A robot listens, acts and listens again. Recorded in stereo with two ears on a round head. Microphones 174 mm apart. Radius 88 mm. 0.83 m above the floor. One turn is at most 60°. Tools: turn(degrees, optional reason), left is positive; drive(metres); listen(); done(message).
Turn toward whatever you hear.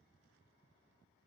listen()
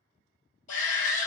turn(degrees=40, reason="The shout: about 40° left or 140° left.")
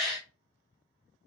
done("Facing the shout, 1 to 2 m away.")